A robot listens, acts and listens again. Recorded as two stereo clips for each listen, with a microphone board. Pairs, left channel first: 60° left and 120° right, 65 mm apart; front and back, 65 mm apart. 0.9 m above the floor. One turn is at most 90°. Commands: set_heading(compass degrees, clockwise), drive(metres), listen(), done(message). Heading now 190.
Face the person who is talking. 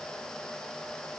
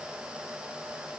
listen()
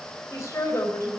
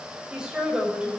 set_heading(100)
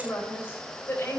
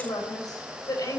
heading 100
set_heading(90)
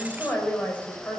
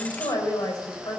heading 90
done("Facing the woman speaking.")